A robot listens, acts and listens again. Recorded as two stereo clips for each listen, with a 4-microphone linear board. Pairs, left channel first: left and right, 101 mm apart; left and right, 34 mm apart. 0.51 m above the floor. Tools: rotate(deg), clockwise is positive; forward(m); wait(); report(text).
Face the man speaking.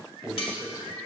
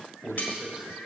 rotate(20)
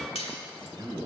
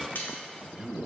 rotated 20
rotate(135)
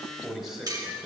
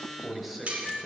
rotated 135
report("Facing the man speaking.")